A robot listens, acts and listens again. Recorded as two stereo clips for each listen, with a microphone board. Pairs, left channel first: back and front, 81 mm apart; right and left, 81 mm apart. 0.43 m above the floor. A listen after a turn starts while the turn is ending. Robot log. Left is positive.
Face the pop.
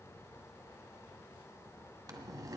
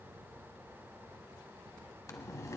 cmd idle
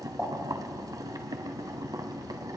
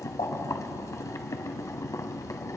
note: The pop: 75° right.
cmd yaw -75
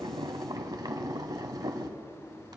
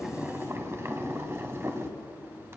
end: Facing where the pop came from. I can't hear it now.